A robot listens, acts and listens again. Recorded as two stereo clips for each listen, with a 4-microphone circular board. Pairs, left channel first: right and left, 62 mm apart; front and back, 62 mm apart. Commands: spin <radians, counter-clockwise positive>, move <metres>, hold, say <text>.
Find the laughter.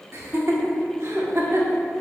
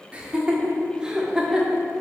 spin 1.83
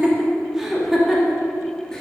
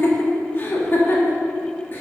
say Found it: laughter, straight ahead, 1 to 2 m away.